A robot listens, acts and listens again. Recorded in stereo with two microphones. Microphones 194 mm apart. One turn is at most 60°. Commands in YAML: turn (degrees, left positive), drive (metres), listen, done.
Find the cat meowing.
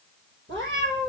turn: -60
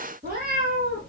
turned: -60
turn: -55
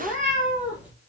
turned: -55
turn: -10
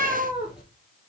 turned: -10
done: "Found it: a cat meowing, straight ahead."